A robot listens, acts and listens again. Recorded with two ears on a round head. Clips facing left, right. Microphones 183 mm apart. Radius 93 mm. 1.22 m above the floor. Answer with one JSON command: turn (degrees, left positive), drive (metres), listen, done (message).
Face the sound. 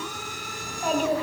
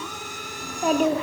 {"turn": -70}
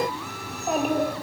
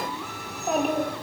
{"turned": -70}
{"done": "Found it: a child speaking, straight ahead, 1 to 2 m away."}